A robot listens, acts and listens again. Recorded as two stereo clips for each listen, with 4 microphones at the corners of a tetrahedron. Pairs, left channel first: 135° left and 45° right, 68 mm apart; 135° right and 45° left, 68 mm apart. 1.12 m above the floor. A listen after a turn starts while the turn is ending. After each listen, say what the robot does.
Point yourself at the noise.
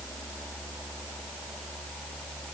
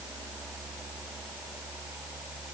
Keep listening.
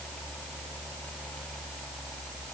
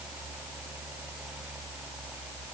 Keep listening.
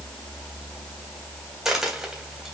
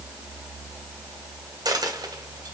Turn 35° left.
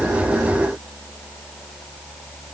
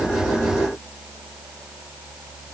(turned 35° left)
I heard a dropped coin from this way, but can't make it out now.